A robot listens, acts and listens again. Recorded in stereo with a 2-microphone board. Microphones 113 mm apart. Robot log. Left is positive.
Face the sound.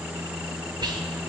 note: The whispering: about 40° right or 140° right.
cmd yaw -40
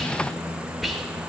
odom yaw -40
end: Facing the whispering, 1 to 2 m away.